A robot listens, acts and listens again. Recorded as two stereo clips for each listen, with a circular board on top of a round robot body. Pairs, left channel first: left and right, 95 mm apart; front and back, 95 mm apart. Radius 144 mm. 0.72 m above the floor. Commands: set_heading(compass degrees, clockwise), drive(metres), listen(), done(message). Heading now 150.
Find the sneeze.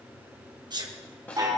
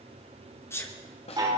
set_heading(210)
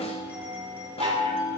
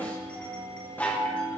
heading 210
done("Facing where the sneeze came from. I can't hear it now.")